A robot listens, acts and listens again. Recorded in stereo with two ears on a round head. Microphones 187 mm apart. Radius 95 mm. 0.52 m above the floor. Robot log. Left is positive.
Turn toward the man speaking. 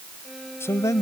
note: The man speaking: about 15° left or 165° left.
cmd yaw +15
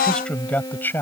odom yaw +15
cmd yaw +30
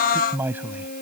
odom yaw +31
note: So it is at 10° right.
cmd yaw -10
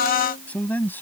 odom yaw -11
note: The man speaking is now 10° left.
cmd yaw +10
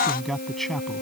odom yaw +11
end: Found it: a man speaking, straight ahead.